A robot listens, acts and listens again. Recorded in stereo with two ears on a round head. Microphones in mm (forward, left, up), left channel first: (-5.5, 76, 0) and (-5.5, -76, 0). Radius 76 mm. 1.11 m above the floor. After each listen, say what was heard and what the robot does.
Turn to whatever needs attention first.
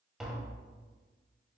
Keep listening.
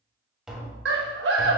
The scream: about 70° right or 110° right. Turn 70° right.
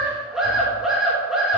Facing the scream.